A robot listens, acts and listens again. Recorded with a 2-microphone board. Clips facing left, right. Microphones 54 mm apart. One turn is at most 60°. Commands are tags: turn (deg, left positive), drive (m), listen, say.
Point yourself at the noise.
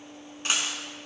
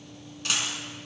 <turn deg="25"/>
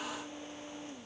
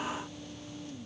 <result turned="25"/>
<listen/>
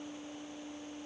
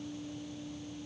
<say>I heard a dropped coin, but can't make it out now. It was about straight ahead or 130° left.</say>